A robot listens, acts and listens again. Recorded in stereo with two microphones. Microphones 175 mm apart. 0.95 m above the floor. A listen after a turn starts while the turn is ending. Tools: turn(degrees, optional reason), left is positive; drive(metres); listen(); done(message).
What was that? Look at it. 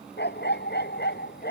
turn(degrees=75, reason="The dog barking: about 75° left or 105° left.")
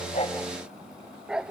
done("Found it: a dog barking, straight ahead.")